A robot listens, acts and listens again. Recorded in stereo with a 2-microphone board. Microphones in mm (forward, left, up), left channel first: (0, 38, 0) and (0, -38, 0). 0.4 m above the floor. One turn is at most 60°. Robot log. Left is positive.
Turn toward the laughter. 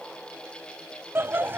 note: The laughter: about 25° right or 155° right.
cmd yaw -25
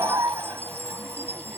note: So it is at 135° right.
cmd yaw -60
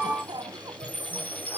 note: The laughter is now 75° right.
cmd yaw -60
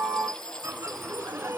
note: The laughter is now 35° right.
cmd yaw -35
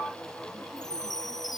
cmd idle
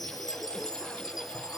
cmd idle
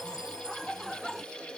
end: Facing the laughter.